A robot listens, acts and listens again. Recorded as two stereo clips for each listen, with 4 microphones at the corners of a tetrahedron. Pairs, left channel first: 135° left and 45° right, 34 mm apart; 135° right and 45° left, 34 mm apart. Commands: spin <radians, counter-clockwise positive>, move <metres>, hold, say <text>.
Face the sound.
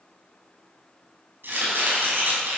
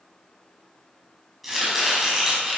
spin -0.70
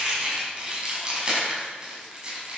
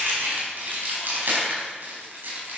spin 0.35
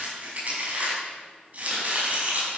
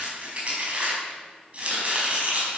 say Found it: chopping, straight ahead.